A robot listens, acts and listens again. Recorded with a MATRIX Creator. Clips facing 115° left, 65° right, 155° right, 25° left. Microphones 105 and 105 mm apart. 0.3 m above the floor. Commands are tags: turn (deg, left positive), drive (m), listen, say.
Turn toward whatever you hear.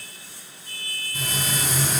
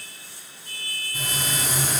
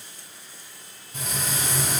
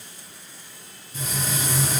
<turn deg="-140"/>
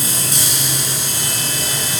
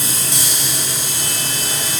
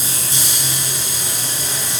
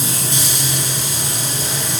<turn deg="35"/>
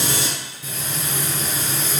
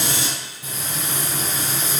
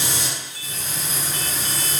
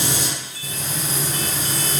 <say>Facing the frying, under 1 m away.</say>